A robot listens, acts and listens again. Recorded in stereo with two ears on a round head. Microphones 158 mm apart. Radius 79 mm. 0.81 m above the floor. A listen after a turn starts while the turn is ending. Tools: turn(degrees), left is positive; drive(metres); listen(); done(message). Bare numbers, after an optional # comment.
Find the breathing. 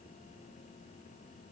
listen()
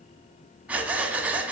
turn(-30)
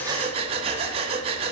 # So it is at 145° right.
turn(-145)
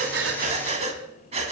# The breathing is now 40° right.
turn(-40)
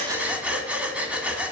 done("Found it: breathing, straight ahead.")